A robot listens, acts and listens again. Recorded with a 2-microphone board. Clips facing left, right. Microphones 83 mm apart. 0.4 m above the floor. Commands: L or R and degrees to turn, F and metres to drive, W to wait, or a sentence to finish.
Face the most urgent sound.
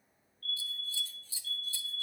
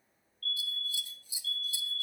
R55
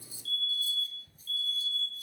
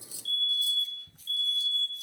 R55
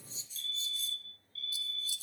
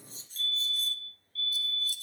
Found it: a fire alarm, straight ahead, 2 to 4 m away.